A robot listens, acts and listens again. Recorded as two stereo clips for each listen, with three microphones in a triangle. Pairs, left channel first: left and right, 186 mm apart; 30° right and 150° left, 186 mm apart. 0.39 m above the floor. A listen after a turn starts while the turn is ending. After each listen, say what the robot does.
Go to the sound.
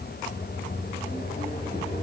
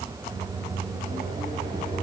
Turn 130° left.
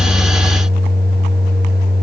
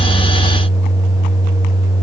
Turn 15° left.
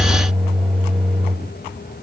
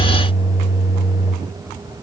Drive 1.0 m forward.
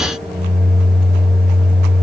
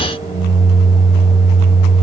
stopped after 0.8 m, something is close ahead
I am next to the microwave.